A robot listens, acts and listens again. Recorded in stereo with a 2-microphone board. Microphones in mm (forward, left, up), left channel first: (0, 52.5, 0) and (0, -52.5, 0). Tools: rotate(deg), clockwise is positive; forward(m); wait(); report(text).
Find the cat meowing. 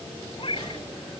rotate(-55)
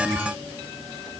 wait()
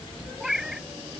report("Found it: a cat meowing, straight ahead.")